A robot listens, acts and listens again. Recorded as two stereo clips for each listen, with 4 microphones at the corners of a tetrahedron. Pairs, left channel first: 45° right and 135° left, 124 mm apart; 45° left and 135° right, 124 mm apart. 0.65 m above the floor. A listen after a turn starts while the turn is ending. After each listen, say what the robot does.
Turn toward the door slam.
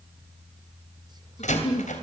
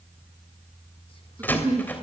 Turn 30° right.
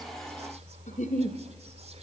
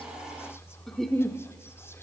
Facing where the door slam came from. I can't hear it now.